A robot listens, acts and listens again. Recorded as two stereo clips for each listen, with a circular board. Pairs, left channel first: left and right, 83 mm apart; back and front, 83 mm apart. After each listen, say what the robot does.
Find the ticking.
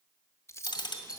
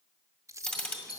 Turn 105° left.
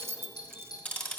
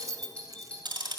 Turn 25° left.
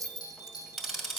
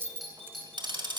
Found it: ticking, straight ahead.